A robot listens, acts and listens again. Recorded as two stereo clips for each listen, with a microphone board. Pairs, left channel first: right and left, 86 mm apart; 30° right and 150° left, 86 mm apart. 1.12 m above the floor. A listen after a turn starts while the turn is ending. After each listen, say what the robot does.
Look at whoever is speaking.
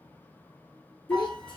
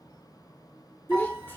Turn 90° right.
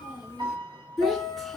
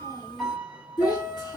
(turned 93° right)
Found it: a child speaking, straight ahead, 2 to 4 m away.